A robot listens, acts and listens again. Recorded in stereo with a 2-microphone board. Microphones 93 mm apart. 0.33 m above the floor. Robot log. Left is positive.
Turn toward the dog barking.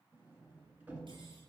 cmd idle
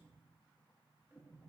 cmd idle
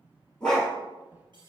cmd yaw +30
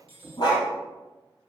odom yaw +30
note: So it is at 135° left.
cmd yaw +135
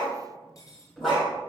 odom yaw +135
end: Found it: a dog barking, straight ahead, over 4 m away.